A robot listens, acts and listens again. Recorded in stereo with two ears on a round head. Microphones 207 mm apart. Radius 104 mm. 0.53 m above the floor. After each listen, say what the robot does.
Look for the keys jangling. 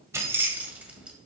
Turn 30° right.
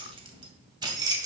Turn 20° right.
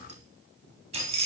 Turn 150° right.
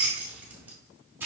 Turn 10° right.
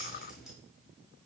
Found it: keys jangling, straight ahead.